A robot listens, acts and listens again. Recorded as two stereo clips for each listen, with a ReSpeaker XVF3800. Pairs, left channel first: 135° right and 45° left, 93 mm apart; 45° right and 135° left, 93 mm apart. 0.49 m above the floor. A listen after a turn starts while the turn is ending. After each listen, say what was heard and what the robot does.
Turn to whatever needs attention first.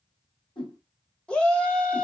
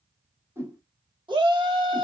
The shout: 145° left. Turn 145° left.
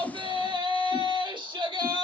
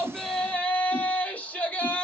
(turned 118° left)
The shout is now 30° left. Turn 30° left.
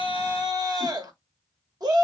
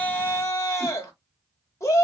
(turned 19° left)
The shout is now 10° left. Turn 10° left.
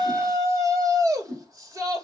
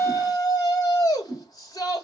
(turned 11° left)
Facing the shout, 1 to 2 m away.